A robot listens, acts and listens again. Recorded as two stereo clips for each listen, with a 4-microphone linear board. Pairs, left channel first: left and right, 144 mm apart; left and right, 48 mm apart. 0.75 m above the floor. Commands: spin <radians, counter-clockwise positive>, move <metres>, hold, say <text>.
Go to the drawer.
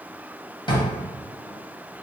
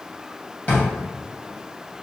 spin 0.61
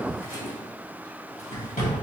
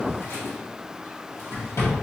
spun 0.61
spin 1.92
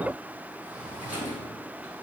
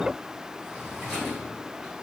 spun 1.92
spin -0.17
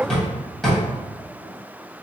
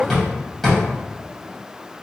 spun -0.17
move 1.0
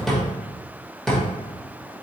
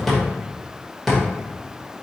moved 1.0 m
move 1.0
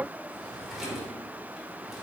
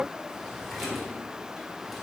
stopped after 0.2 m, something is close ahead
hold
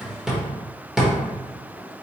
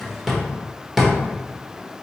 say Arrived at the drawer, straight ahead.